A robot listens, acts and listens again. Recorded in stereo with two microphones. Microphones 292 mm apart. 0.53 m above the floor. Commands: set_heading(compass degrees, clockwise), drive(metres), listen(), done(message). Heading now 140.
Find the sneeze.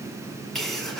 set_heading(110)
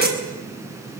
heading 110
set_heading(140)
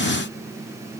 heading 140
done("I heard a sneeze from this way, but can't make it out now.")